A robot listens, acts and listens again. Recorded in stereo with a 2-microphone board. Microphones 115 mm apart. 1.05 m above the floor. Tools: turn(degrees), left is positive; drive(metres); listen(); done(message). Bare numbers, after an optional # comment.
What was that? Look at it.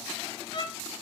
# The violin: about 45° left or 135° left.
turn(45)
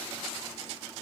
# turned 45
listen()
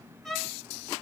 done("Found it: a violin, straight ahead.")